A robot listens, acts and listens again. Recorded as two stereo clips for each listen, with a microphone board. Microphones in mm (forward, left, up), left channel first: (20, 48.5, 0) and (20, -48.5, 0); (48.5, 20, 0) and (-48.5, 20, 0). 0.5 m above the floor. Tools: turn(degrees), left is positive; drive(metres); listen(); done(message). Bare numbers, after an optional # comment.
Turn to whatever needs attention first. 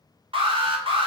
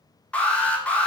# The alarm: 75° right.
turn(-75)
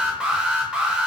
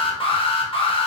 # The alarm is now 10° right.
turn(-10)
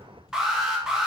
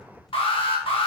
done("Facing the alarm, 1 to 2 m away.")